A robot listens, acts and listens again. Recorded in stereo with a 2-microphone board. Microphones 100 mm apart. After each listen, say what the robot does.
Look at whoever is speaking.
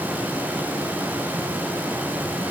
Keep listening.
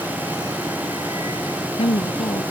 Turn 90° left.
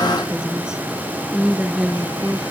Found it: a woman speaking, straight ahead.